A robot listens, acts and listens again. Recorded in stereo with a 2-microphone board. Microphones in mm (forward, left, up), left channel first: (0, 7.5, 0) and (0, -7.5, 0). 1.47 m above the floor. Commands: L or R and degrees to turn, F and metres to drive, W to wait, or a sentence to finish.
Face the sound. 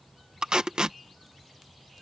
R90
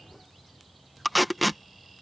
Facing the tape being pulled.